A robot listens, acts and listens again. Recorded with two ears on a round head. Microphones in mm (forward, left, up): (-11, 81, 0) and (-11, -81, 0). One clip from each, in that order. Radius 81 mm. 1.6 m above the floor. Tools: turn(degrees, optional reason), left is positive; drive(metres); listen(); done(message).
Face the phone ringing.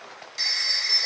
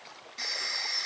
turn(degrees=45, reason="The phone ringing: about 45° left or 135° left.")
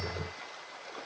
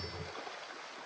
listen()
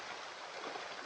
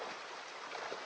listen()
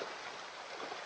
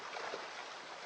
done("I heard a phone ringing, but can't make it out now. It was about straight ahead or 90° left.")